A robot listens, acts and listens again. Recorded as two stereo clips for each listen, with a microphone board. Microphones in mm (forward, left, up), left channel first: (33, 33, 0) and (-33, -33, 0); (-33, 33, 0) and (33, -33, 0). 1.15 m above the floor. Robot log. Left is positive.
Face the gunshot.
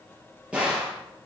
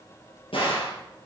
note: The gunshot: 145° left.
cmd yaw +145
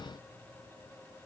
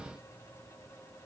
end: I heard a gunshot from this way, but can't make it out now.